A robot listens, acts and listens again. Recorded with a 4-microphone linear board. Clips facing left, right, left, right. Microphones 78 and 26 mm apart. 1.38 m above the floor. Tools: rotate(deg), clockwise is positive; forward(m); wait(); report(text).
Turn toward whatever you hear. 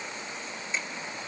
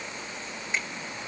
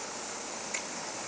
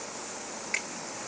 rotate(60)
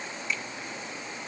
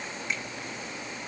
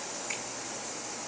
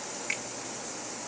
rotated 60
rotate(60)
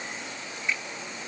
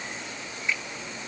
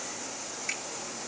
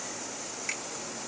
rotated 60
report("Found it: a finger snap, straight ahead.")